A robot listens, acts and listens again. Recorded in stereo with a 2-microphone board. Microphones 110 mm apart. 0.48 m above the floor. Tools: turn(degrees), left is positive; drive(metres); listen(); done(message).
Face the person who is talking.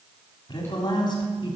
turn(degrees=45)
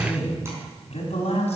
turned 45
turn(degrees=90)
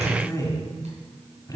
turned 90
turn(degrees=30)
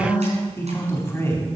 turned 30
turn(degrees=20)
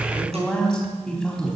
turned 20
done("Facing the man speaking, 2 to 4 m away.")